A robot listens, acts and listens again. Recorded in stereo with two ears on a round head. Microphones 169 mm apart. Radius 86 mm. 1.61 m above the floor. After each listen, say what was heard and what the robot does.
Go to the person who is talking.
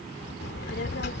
The child speaking: about 55° left or 125° left. Turn 55° left.
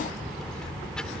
Drive 1.0 m forward.
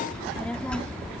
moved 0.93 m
Drive 1.0 m forward.
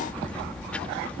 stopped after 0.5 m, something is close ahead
The child speaking is now 10° left. Turn 10° left.
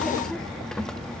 Arrived at the child speaking, straight ahead.